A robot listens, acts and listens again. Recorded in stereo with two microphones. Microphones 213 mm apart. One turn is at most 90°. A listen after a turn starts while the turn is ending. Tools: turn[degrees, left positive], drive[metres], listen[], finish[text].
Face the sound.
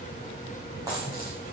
Thought: The dropped coin: about 15° right or 165° right.
Action: turn[-15]
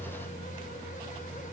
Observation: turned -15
Action: listen[]
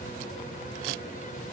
Action: finish[I heard a dropped coin, but can't make it out now. It was about straight ahead or 150° right.]